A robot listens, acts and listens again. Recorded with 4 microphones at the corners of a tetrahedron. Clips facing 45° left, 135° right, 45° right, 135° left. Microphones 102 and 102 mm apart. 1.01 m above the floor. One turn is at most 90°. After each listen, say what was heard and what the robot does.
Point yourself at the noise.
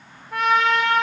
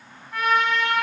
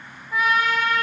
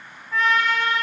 The trumpet: 35° left. Turn 35° left.
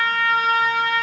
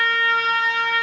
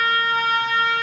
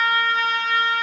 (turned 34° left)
Found it: a trumpet, straight ahead.